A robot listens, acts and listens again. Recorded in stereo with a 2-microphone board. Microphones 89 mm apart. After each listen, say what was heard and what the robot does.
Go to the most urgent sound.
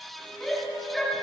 Turn 30° left.
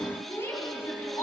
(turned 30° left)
So it is at 150° left. Turn 150° left.
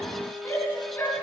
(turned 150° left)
The shout is now 30° left. Turn 30° left.
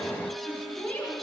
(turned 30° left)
The shout is now 15° left. Turn 15° left.
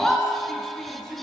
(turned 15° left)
Drive 1.0 m forward.
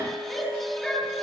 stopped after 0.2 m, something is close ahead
Something is in my way. I am facing the shout but have not reached it.